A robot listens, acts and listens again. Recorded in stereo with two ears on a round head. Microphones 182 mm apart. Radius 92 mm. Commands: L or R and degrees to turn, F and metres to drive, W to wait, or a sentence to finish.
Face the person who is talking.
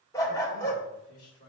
L90
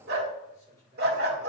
L15
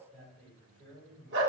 Found it: a man speaking, straight ahead, over 4 m away.